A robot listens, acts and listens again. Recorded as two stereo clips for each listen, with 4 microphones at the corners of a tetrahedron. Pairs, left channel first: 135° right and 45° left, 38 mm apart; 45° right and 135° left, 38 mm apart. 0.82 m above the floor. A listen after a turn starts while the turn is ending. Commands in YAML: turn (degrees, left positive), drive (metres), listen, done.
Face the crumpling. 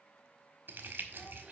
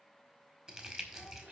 turn: 65
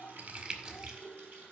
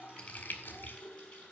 turn: -15
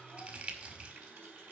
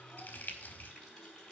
done: "Found it: crumpling, straight ahead."